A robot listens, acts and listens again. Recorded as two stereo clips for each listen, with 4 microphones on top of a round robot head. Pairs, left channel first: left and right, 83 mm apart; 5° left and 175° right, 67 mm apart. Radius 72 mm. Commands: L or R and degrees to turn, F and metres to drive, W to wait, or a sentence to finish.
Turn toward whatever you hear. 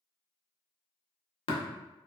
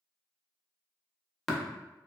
L90
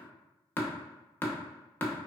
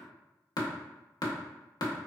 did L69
L20
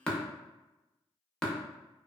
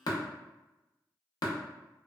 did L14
L10
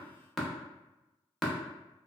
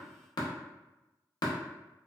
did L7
Found it: tapping, straight ahead, under 1 m away.